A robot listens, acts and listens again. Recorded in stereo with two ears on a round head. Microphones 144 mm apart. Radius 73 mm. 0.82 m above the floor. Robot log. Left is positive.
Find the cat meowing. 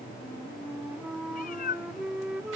note: The cat meowing: about 55° left or 125° left.
cmd yaw +55
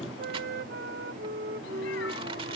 cmd idle
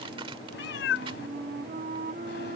note: So it is at 80° left.
cmd yaw +80
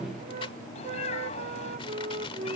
note: The cat meowing is now 40° left.
cmd yaw +40
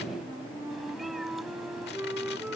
cmd idle
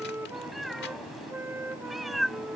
end: Facing the cat meowing.